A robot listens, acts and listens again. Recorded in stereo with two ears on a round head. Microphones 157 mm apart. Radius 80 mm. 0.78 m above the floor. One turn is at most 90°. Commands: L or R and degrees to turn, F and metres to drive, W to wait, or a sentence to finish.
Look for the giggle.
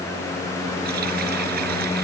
W
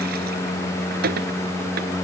W
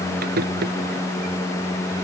I can't make out a giggle.